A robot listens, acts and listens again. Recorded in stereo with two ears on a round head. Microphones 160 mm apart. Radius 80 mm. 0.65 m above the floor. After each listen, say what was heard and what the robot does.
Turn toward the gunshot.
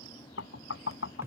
Keep listening.
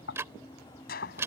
The gunshot: about 60° left or 120° left. Turn 60° left.
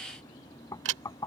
Keep listening.
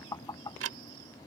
I heard a gunshot, but can't make it out now. It was about straight ahead or 60° left.